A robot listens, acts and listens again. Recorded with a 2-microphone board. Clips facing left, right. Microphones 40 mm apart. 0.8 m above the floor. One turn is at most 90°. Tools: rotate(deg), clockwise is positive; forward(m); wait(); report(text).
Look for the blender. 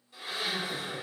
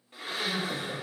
rotate(50)
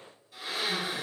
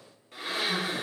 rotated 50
rotate(75)
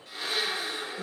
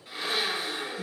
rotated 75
rotate(15)
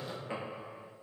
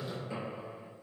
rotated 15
wait()
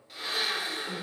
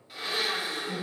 report("Facing the blender, under 1 m away.")